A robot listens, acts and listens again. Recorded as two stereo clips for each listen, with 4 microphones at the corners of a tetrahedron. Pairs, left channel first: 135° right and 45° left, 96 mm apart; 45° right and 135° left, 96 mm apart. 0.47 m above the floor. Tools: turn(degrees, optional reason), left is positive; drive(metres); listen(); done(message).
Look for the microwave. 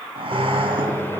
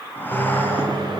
turn(degrees=160, reason="The microwave: 160° left.")
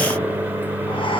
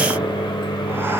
turn(degrees=-25, reason="The microwave is now 25° right.")
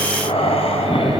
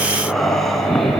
listen()
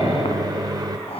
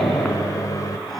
done("Found it: a microwave, straight ahead.")